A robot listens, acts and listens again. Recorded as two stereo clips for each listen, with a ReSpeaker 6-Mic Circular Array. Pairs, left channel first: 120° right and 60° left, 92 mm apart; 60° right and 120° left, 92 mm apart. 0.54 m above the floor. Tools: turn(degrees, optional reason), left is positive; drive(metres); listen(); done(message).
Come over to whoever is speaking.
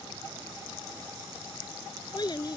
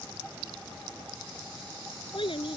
turn(degrees=-80, reason="The child speaking: 80° right.")
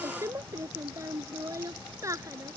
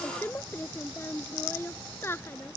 drive(metres=1.0)
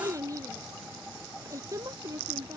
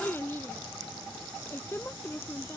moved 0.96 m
drive(metres=1.0)
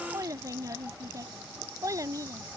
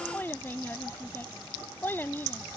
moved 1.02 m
turn(degrees=10, reason="The child speaking is now 10° left.")
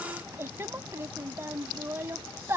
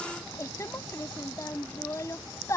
drive(metres=1.0)
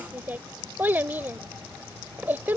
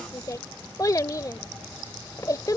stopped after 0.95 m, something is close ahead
turn(degrees=-10, reason="The child speaking is now 10° right.")
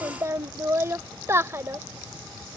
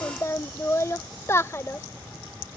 done("I am next to the child speaking.")